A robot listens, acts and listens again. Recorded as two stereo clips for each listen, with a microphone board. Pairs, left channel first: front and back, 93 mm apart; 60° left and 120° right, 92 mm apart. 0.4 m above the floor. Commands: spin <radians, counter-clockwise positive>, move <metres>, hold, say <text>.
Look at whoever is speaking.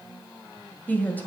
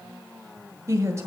spin -1.22
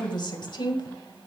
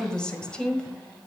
spin -0.35
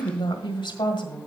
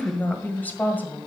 say Found it: a woman speaking, straight ahead, 1 to 2 m away.